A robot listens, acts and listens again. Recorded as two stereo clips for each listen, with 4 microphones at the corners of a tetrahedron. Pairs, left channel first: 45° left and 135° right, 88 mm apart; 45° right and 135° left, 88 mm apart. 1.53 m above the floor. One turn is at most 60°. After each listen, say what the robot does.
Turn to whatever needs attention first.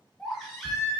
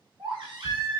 Turn 60° left.
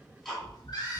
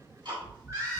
Turn 60° left.
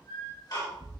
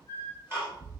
Turn 25° left.
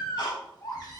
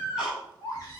Found it: a baby crying, straight ahead, 1 to 2 m away.